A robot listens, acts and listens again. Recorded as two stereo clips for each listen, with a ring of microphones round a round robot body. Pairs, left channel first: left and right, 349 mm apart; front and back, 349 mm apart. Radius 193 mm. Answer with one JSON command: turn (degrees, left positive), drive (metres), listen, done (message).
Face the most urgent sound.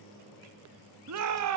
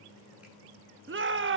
{"turn": -130}
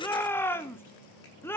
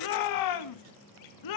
{"done": "Found it: a shout, straight ahead, 1 to 2 m away."}